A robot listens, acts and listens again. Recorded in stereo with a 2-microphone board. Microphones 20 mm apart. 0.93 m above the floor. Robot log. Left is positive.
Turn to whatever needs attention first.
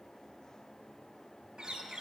cmd idle
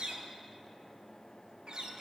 cmd idle
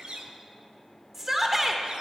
note: The shout: about 15° right or 165° right.
cmd yaw -15
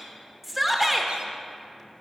end: Found it: a shout, straight ahead, under 1 m away.